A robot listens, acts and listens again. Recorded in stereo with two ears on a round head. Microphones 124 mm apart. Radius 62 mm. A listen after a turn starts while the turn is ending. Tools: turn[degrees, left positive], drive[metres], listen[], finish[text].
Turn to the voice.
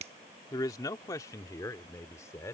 Thought: The man speaking: about 20° left or 160° left.
Action: turn[20]
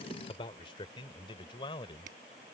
Thought: The man speaking: about 35° left or 145° left.
Action: turn[35]
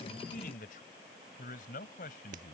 Thought: So it is at 110° left.
Action: turn[110]
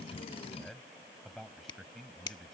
Action: finish[Found it: a man speaking, straight ahead.]